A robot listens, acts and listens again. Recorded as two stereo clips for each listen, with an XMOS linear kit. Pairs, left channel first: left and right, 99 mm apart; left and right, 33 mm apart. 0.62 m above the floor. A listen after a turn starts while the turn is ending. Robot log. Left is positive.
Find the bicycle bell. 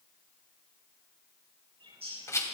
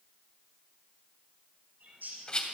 cmd idle
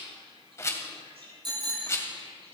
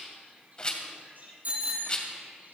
note: The bicycle bell: about 50° right or 130° right.
cmd yaw -50
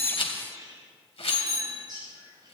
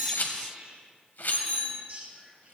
note: So it is at 80° right.
cmd yaw -80
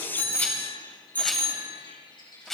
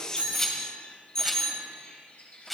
note: The bicycle bell is now 20° left.
cmd yaw +20
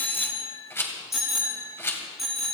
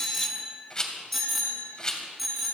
end: Found it: a bicycle bell, straight ahead.